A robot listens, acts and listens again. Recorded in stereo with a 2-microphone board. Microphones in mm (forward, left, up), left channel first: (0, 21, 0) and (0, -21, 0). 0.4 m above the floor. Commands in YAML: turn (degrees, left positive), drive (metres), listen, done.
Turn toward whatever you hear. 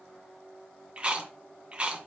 turn: -25
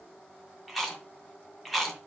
done: "Found it: chewing, straight ahead."